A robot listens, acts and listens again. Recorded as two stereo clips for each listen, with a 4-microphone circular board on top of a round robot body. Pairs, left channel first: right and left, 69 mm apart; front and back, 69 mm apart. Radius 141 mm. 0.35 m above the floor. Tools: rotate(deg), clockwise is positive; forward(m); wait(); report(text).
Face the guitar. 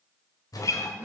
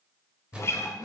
rotate(50)
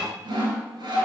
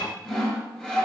rotate(-10)
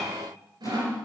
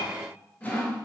report("Facing the guitar, under 1 m away.")